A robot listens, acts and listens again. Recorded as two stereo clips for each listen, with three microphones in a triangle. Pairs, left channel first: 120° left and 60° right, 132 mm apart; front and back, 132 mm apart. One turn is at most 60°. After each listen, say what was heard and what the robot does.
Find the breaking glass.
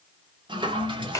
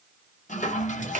Keep listening.
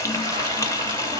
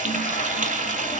Keep listening.
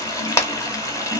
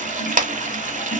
I can't make out breaking glass to turn to.